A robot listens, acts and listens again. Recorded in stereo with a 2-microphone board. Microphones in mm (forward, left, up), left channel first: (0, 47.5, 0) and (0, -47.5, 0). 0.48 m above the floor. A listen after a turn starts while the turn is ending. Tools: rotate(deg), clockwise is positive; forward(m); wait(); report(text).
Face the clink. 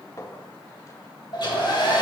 rotate(-35)
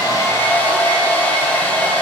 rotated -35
wait()
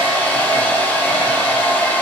wait()
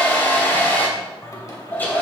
report("I heard a clink, but can't make it out now. It was about straight ahead or 110° left.")